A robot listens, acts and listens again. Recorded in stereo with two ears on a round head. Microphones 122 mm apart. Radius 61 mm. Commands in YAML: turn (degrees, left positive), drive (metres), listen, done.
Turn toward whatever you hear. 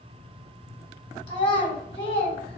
turn: 45
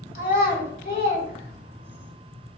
turn: 80
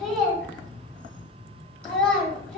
turn: 10
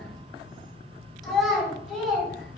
done: "Facing the child speaking."